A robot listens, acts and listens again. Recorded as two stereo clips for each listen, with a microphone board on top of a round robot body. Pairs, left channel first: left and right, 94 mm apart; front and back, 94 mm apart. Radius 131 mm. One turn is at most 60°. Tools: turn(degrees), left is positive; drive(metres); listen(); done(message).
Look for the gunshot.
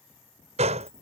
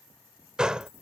turn(degrees=-60)
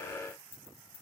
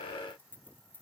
turn(degrees=-35)
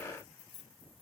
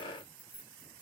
done("I heard a gunshot from this way, but can't make it out now.")